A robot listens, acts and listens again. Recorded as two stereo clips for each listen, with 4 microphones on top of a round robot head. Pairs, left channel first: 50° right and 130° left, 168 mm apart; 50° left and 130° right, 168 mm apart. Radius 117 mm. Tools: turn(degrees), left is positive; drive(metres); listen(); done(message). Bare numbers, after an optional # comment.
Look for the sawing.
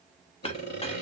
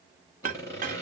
# The sawing: 25° right.
turn(-25)
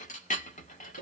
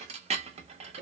listen()
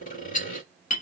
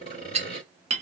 done("Facing the sawing.")